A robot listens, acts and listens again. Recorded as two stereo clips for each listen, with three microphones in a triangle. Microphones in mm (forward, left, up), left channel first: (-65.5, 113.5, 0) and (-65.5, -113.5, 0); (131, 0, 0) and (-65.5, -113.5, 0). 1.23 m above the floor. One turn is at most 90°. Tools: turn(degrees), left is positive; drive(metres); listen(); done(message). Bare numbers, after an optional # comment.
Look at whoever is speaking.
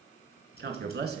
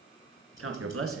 # The man speaking: 135° right.
turn(-90)
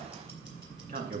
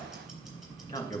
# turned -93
# The man speaking is now 45° right.
turn(-45)
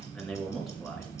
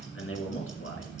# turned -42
done("Facing the man speaking, 1 to 2 m away.")